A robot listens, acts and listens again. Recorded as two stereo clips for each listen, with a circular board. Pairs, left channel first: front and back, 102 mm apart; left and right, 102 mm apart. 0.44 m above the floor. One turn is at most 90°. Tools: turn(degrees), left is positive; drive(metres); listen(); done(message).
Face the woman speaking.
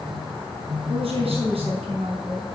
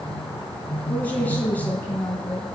turn(degrees=90)
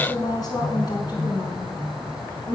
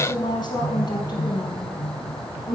turn(degrees=40)
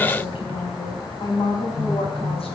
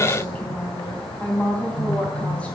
turn(degrees=15)
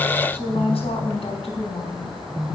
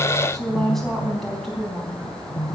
done("Facing the woman speaking, 2 to 4 m away.")